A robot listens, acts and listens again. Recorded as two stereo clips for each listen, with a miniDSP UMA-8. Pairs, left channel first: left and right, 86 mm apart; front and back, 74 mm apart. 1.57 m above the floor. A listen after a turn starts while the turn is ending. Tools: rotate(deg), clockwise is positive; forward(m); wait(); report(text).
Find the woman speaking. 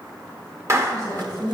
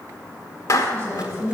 rotate(130)
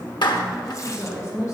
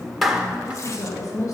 rotate(-40)
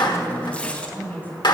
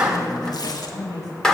rotate(-25)
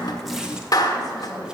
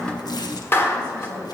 report("Facing the woman speaking.")